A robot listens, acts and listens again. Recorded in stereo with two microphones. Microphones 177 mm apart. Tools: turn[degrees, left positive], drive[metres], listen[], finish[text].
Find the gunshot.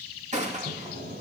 Thought: The gunshot: about 40° right or 140° right.
Action: turn[-40]
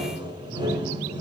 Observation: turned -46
Action: listen[]
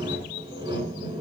Action: finish[I heard a gunshot, but can't make it out now. It was about 5° left or 90° right.]